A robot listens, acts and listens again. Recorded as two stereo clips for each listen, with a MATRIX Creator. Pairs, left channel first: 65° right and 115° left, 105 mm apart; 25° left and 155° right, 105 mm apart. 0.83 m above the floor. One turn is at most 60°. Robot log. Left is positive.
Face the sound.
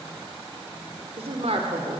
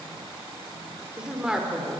note: The woman speaking: 120° left.
cmd yaw +60
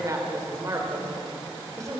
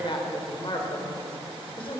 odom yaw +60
note: The woman speaking is now 55° left.
cmd yaw +55
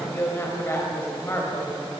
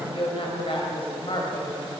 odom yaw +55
end: Found it: a woman speaking, straight ahead, over 4 m away.